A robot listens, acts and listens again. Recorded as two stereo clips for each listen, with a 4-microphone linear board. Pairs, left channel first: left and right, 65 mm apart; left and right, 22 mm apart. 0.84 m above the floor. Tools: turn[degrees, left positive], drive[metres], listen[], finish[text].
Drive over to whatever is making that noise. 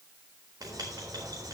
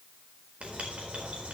Action: turn[-90]
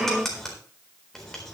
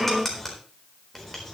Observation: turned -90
Action: drive[1.0]
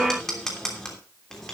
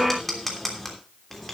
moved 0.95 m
Thought: The writing is now 10° left.
Action: turn[10]
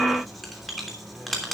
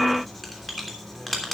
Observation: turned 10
Action: drive[1.0]
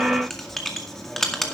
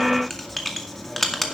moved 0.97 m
Action: drive[1.0]
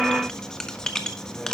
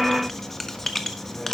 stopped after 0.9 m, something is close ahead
Thought: The writing is now 10° left.
Action: turn[10]
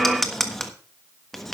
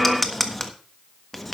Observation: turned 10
Action: finish[I am next to the writing.]